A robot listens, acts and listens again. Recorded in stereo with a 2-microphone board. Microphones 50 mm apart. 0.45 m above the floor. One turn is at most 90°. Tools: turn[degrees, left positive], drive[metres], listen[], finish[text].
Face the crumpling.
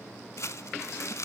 Thought: The crumpling: about 65° left or 115° left.
Action: turn[65]
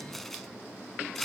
Action: finish[Facing the crumpling, under 1 m away.]